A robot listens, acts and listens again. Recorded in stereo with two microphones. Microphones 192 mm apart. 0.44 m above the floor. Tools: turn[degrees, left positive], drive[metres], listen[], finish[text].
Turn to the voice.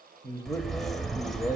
Thought: The man speaking: about 20° left or 160° left.
Action: turn[20]
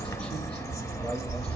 Action: listen[]
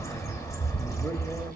Action: listen[]
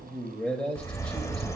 Action: finish[Facing the man speaking, 1 to 2 m away.]